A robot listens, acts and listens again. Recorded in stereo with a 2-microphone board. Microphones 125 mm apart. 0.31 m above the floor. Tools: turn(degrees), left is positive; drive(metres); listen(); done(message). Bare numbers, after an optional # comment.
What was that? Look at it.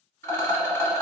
# The rattle: about 20° left or 160° left.
turn(20)
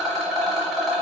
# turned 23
done("Facing the rattle, 1 to 2 m away.")